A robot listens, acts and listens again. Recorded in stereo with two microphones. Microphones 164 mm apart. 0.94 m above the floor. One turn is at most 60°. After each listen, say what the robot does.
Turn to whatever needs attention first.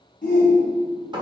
Turn 60° left.
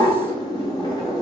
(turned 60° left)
Keep listening.
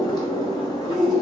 Facing the shout.